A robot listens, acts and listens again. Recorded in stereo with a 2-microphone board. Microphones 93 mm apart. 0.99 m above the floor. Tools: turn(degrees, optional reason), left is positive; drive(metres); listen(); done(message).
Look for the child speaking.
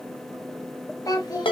turn(degrees=45, reason="The child speaking: about 45° left or 135° left.")
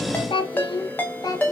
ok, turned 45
turn(degrees=40, reason="So it is at 40° left.")
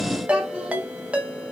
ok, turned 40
listen()
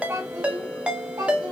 turn(degrees=-35, reason="The child speaking is now 35° right.")
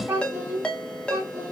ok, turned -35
turn(degrees=-20, reason="The child speaking is now 20° right.")
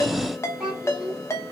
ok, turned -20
done("Facing the child speaking, 2 to 4 m away.")